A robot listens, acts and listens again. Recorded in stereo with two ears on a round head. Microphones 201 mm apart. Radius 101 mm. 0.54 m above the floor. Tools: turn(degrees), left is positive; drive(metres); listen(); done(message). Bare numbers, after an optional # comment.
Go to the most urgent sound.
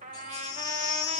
# The baby crying: about 20° left or 160° left.
turn(20)
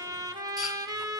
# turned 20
listen()
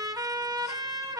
listen()
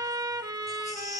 drive(1.0)
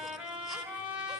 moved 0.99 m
listen()
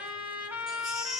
drive(1.0)
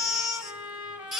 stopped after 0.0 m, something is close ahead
done("I am next to the baby crying.")